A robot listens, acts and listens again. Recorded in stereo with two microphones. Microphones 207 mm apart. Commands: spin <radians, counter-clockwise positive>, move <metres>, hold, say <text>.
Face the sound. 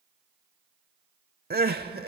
spin -0.87
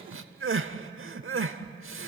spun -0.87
spin -1.40
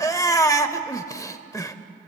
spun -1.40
spin 0.26
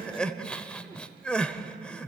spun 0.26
say Facing the crying, under 1 m away.